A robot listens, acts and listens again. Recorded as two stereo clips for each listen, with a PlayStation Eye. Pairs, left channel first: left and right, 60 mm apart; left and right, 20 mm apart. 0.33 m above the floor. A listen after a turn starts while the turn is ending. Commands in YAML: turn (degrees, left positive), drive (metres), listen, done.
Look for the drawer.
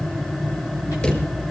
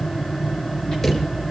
turn: 20
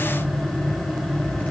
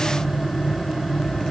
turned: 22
listen: true
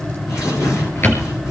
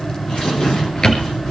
turn: 140
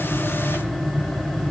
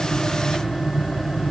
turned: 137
listen: true
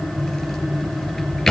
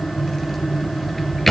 done: "Found it: a drawer, straight ahead."